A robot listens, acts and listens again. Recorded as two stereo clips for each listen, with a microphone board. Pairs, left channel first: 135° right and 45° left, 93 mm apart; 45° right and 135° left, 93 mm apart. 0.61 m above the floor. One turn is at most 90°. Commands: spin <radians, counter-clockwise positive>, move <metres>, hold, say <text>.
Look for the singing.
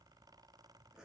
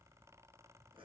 hold
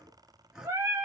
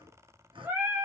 spin 1.40
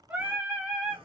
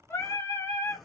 spin -0.61
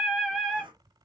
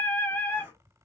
spin -0.87
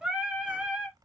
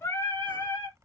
spin -0.79
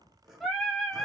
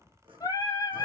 spin -0.79
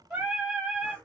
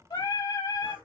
spin -0.44
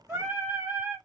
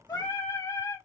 spin -0.17
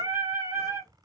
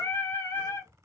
say Found it: singing, straight ahead.